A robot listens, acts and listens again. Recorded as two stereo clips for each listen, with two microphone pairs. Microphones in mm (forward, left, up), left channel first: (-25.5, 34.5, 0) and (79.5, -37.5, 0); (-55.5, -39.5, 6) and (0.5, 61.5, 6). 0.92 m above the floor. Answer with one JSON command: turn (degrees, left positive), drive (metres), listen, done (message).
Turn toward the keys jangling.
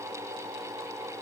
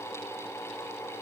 {"listen": true}
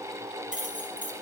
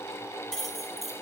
{"turn": -25}
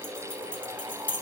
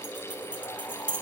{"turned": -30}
{"turn": 20}
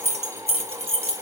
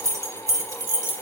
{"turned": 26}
{"done": "Found it: keys jangling, straight ahead."}